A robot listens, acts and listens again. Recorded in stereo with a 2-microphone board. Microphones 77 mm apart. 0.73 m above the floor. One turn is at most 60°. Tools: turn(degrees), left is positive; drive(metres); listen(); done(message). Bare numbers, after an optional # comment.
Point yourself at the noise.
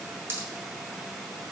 # The pop: about 35° right or 145° right.
turn(-35)
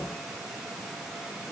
listen()
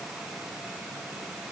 done("I heard a pop, but can't make it out now. It was about straight ahead or 110° right.")